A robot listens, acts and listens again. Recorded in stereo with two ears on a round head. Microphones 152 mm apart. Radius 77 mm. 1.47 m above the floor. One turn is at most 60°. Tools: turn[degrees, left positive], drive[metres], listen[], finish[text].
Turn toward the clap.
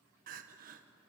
Action: listen[]
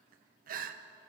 Action: listen[]
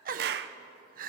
Thought: The clap: about 60° right or 120° right.
Action: turn[-60]
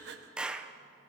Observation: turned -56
Action: finish[Found it: a clap, straight ahead, under 1 m away.]